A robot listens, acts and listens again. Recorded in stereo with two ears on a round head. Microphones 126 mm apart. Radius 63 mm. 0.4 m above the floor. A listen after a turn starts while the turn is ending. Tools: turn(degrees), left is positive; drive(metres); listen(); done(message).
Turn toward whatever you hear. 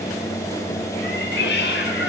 turn(degrees=90)
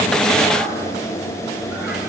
listen()
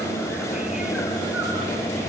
listen()
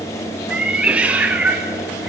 turn(degrees=-10)
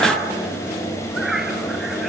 done("Found it: a cat meowing, straight ahead, 2 to 4 m away.")